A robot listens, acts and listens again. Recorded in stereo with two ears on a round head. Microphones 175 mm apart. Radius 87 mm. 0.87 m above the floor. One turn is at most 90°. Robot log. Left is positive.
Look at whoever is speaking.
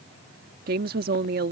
note: The woman speaking: about 50° right or 130° right.
cmd yaw -50
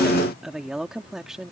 end: Facing the woman speaking.